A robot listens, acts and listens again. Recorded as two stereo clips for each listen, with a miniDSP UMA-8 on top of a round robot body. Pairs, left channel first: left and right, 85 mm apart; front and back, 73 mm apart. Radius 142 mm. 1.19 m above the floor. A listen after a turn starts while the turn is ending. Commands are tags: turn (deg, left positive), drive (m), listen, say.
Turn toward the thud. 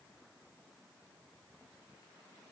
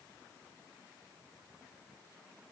<listen/>
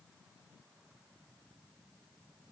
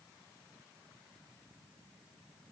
<listen/>
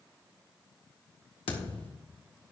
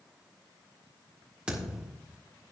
<turn deg="105"/>
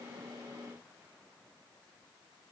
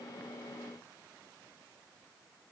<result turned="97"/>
<say>Facing where the thud came from. I can't hear it now.</say>